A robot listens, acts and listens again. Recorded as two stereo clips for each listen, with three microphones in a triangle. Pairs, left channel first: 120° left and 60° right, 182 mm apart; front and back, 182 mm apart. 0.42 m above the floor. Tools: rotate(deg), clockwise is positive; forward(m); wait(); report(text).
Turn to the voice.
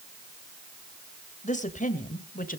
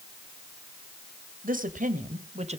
rotate(-135)
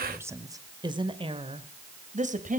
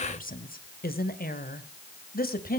rotate(25)
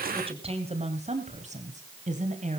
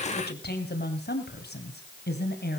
rotate(15)
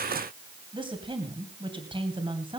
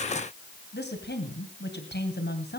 report("Facing the woman speaking, 2 to 4 m away.")